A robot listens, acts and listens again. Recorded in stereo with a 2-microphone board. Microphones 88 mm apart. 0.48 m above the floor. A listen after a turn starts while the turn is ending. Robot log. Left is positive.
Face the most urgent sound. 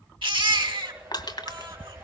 note: The baby crying: about 75° right or 105° right.
cmd yaw -75
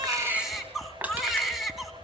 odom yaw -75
end: Facing the baby crying.